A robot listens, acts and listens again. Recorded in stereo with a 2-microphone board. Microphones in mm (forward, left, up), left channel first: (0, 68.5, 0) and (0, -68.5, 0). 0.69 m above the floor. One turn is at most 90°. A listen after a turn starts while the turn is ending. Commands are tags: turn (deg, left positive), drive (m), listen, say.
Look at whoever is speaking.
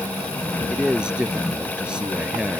<turn deg="-30"/>
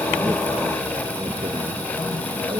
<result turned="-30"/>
<listen/>
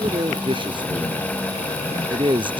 <turn deg="-90"/>
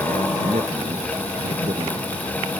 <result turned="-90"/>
<turn deg="-50"/>
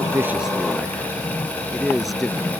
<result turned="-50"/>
<say>Found it: a man speaking, straight ahead.</say>